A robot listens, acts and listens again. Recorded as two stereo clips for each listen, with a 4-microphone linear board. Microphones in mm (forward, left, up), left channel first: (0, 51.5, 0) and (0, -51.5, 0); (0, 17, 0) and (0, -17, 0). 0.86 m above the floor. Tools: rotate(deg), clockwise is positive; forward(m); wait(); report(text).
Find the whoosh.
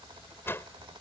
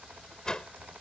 rotate(-25)
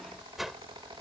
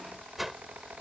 report("Found it: a whoosh, straight ahead.")